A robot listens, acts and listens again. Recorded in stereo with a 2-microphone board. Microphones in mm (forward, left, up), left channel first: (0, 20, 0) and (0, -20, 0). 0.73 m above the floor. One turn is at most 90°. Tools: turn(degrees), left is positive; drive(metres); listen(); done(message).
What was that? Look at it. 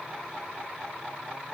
listen()
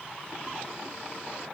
listen()
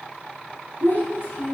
turn(degrees=75)
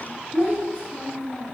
turn(degrees=25)
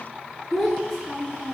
turn(degrees=10)
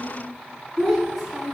done("Found it: a child speaking, straight ahead, over 4 m away.")